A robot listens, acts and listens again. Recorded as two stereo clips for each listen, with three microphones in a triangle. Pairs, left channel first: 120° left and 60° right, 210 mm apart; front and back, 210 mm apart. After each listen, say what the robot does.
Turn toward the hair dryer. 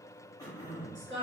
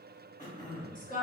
Keep listening.
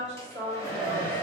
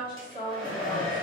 Found it: a hair dryer, straight ahead, 1 to 2 m away.